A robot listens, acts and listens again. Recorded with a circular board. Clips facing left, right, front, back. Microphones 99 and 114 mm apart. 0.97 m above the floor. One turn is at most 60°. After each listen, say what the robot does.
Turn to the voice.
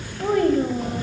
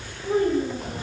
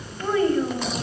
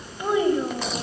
Turn 60° left.
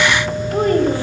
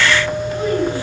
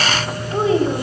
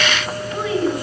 Turn 55° left.
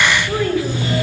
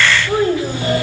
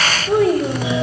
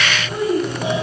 Turn 25° right.
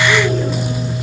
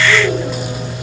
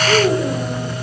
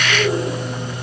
Keep listening.
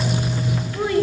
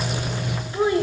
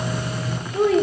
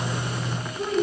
Turn 20° right.
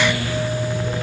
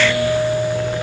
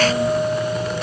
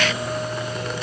Keep listening.
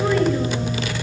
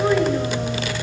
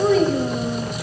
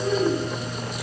Found it: a child speaking, straight ahead.